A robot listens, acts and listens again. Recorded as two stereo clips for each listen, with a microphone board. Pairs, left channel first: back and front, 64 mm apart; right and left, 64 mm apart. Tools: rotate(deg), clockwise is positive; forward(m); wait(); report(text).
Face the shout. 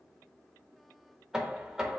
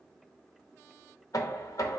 wait()
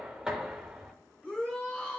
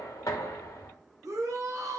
rotate(-110)
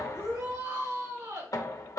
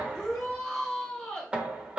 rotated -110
rotate(15)
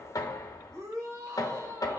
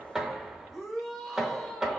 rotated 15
report("Facing the shout.")